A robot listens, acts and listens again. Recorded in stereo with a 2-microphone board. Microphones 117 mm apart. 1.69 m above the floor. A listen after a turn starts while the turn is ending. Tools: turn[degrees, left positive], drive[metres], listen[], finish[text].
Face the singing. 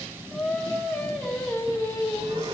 Thought: The singing: about 25° left or 155° left.
Action: turn[25]
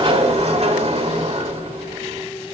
Action: listen[]
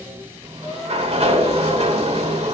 Action: listen[]
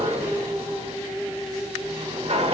Thought: The singing: about 30° left or 150° left.
Action: turn[30]
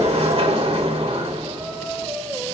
Action: finish[Facing the singing, 2 to 4 m away.]